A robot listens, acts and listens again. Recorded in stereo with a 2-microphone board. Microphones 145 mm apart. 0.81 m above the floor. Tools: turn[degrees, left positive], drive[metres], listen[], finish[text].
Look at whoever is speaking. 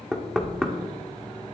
Action: listen[]
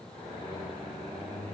Action: listen[]
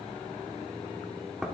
Action: finish[I can't make out anyone speaking to turn to.]